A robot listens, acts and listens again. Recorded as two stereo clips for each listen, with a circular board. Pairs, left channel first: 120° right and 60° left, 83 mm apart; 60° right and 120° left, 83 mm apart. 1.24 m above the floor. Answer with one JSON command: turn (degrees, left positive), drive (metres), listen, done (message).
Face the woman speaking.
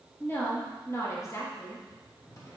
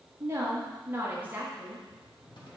{"turn": -165}
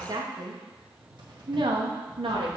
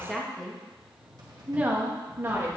{"turn": 60}
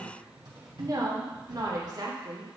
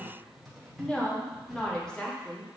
{"turn": 20}
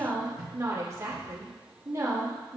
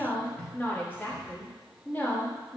{"turn": 10}
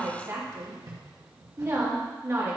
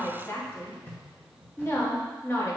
{"done": "Found it: a woman speaking, straight ahead, 1 to 2 m away."}